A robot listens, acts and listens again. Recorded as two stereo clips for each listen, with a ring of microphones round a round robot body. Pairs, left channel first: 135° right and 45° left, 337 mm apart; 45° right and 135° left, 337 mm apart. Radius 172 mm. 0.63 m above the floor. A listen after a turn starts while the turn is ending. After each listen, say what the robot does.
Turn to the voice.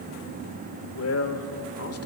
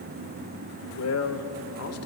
Turn 90° right.
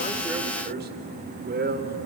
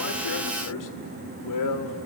Turn 15° right.
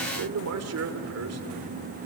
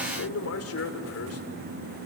Facing the man speaking.